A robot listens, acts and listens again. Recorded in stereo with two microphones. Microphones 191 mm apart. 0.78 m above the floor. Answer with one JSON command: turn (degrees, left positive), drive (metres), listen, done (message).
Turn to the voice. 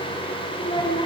{"turn": 25}
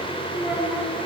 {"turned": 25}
{"done": "Found it: a child speaking, straight ahead."}